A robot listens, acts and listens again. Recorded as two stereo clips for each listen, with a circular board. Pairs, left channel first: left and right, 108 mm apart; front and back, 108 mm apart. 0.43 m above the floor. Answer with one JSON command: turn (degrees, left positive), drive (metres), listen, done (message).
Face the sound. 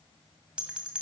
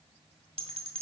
{"turn": -170}
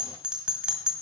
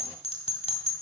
{"turn": -10}
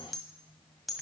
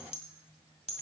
{"done": "Found it: a bell, straight ahead, 1 to 2 m away."}